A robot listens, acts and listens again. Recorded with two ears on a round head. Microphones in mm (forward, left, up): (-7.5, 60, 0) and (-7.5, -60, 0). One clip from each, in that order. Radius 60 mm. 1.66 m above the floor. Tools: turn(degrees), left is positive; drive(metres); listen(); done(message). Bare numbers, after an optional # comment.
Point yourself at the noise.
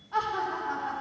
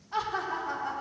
# The laughter: about 65° right or 115° right.
turn(-65)
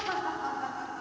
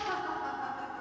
# So it is at 35° left.
turn(35)
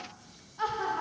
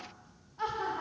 # The laughter is now 25° left.
turn(25)
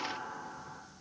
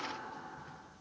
# The laughter is now 10° left.
turn(10)
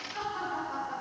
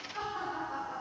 # The laughter is now 15° left.
turn(15)
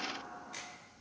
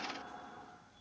done("Facing the laughter.")